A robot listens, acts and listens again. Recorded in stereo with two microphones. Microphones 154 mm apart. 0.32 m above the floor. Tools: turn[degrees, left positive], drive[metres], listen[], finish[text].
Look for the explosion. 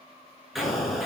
Action: turn[30]
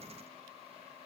Action: listen[]
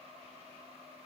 Action: finish[I heard an explosion, but can't make it out now. It was about 30° right or 150° left.]